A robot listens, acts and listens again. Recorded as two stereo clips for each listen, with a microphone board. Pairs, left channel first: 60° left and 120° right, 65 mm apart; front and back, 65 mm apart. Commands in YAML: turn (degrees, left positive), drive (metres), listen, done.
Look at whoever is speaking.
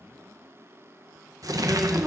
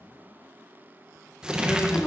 turn: -60
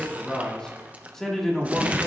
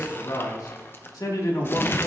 turn: -25
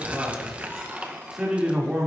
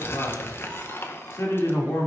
turn: -40
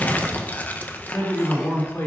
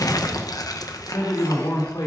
done: "Facing the man speaking, 2 to 4 m away."